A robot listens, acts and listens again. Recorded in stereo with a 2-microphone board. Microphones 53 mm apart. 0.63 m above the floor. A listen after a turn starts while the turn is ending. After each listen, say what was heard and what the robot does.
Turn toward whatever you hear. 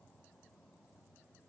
Keep listening.
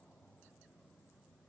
Keep listening.
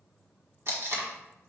The tape being pulled: about 50° right or 130° right. Turn 50° right.
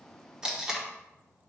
So it is at 10° right. Turn 10° right.
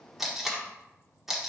Found it: tape being pulled, straight ahead, 1 to 2 m away.